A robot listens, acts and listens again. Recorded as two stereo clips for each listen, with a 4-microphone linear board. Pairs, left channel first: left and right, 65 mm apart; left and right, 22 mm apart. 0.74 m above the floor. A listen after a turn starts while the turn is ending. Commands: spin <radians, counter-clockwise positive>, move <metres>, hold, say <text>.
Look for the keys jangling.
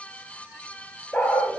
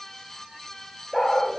hold
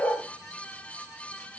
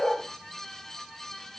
hold
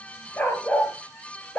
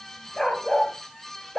say I can't make out keys jangling to turn to.